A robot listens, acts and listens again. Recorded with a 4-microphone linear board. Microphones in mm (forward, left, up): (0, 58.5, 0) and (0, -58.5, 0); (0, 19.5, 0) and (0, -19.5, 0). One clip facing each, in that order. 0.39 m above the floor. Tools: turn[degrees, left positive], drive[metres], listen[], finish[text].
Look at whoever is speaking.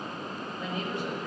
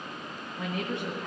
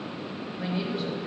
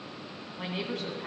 Thought: The woman speaking: about 65° right or 115° right.
Action: turn[-65]
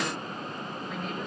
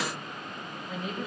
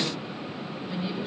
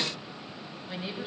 Action: finish[Found it: a woman speaking, straight ahead, 2 to 4 m away.]